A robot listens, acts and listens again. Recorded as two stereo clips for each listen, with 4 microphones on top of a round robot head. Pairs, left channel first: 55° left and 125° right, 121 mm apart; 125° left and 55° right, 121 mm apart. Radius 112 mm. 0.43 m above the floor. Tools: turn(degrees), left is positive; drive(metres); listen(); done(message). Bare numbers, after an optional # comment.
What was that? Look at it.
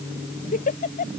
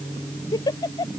# The giggle: 65° left.
turn(65)
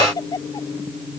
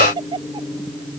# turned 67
done("Facing the giggle.")